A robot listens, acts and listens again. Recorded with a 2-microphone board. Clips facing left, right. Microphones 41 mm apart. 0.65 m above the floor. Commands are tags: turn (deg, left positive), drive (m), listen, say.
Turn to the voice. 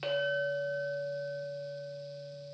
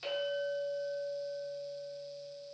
<listen/>
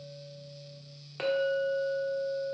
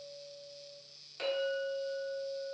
<listen/>
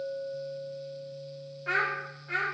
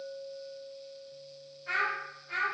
<turn deg="55"/>
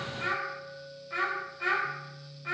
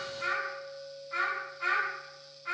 <turn deg="45"/>
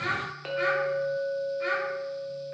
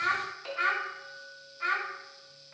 <say>Found it: a child speaking, straight ahead.</say>